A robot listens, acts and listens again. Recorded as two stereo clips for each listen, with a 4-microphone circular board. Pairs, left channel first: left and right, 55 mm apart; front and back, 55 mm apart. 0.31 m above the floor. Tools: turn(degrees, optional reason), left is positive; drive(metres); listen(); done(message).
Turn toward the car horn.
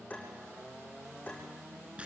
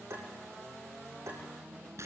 listen()
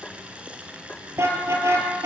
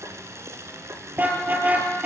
turn(degrees=-120, reason="The car horn: 120° right.")
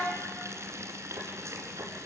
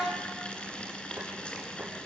listen()
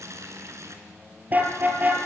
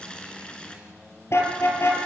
turn(degrees=-35, reason="The car horn is now 35° right.")
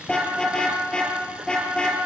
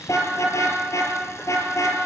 turn(degrees=15, reason="The car horn is now 15° left.")
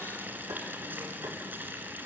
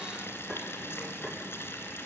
listen()
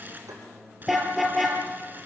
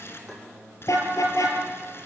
done("Facing the car horn, 2 to 4 m away.")